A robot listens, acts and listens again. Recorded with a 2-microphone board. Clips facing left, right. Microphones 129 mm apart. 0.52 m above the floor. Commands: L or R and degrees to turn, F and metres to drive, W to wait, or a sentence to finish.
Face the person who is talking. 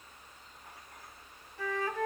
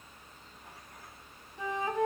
W
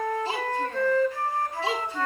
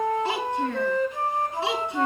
R90
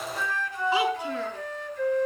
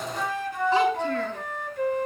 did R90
W
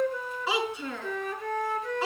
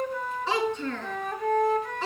Found it: a child speaking, straight ahead.